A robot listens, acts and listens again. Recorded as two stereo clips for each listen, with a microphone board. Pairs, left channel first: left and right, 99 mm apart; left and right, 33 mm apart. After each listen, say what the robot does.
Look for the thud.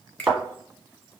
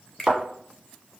Turn 30° right.
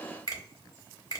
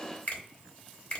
Keep listening.
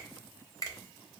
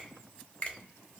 I heard a thud, but can't make it out now. It was about 25° left or 145° right.